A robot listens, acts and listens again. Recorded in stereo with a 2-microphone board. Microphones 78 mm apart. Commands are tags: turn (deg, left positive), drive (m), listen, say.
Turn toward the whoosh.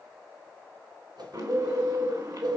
<turn deg="-65"/>
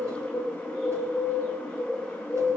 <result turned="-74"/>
<listen/>
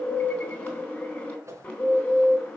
<turn deg="-40"/>
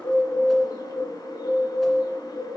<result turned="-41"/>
<listen/>
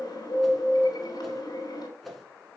<say>Facing the whoosh.</say>